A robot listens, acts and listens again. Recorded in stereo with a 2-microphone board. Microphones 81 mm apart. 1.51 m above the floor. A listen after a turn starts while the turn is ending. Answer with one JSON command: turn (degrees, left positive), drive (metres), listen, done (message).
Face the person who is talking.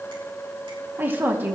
{"turn": -25}
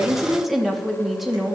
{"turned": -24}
{"done": "Found it: a woman speaking, straight ahead, 2 to 4 m away."}